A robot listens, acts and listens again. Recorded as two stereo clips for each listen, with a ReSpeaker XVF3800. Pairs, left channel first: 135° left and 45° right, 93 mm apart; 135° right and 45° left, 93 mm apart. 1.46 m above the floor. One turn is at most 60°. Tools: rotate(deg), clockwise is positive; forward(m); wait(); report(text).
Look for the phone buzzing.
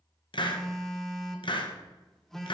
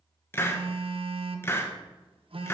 rotate(-50)
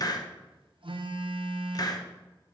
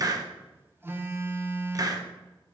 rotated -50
rotate(20)
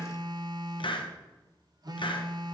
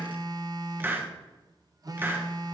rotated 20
report("Facing the phone buzzing.")